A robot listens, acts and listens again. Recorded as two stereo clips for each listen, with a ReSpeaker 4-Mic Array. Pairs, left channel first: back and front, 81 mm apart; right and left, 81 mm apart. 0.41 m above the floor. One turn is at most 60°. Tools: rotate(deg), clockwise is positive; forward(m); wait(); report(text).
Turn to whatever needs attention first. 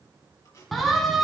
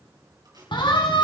rotate(60)
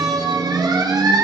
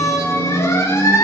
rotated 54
rotate(35)
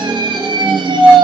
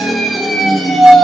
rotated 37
report("Facing the siren, 2 to 4 m away.")